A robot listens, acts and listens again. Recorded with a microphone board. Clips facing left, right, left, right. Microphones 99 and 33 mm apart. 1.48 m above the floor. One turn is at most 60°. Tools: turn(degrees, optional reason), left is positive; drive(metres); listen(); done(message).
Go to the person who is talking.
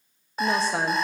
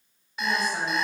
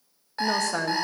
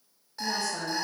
turn(degrees=60)
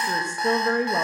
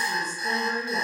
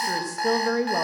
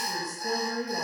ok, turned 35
turn(degrees=60, reason="So it is at 65° left.")
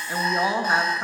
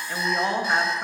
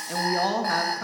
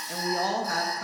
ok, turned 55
turn(degrees=10, reason="The woman speaking is now 10° left.")
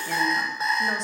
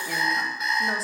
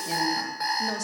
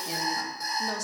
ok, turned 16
listen()
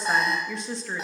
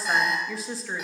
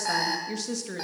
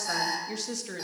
drive(metres=1.0)
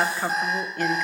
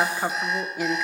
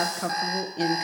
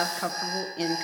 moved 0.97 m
turn(degrees=-10, reason="The woman speaking is now 10° right.")
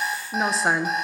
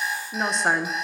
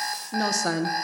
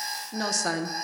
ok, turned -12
drive(metres=1.0)
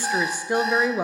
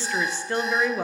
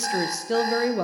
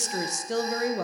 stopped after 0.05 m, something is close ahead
turn(degrees=15, reason="The woman speaking is now 15° left.")
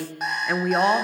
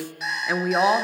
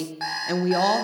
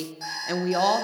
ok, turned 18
done("I am next to the woman speaking.")